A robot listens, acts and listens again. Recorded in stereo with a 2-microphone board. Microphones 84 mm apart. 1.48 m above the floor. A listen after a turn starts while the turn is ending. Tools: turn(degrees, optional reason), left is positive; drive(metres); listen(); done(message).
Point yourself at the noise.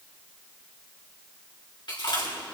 turn(degrees=70, reason="The chewing: about 70° left or 110° left.")
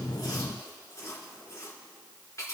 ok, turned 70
turn(degrees=40, reason="So it is at 40° left.")
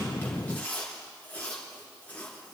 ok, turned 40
turn(degrees=20, reason="The chewing is now 20° left.")
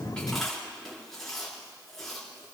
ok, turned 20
done("Facing the chewing.")